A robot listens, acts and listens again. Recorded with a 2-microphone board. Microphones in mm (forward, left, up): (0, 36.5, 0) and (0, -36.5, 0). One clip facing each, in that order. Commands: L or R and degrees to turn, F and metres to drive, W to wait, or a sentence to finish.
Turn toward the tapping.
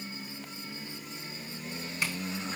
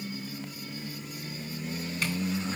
W
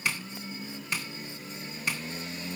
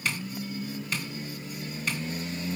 L30
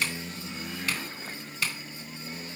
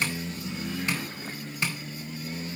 R25
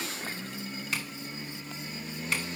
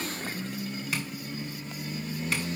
W
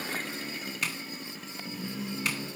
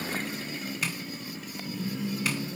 Facing the tapping, 2 to 4 m away.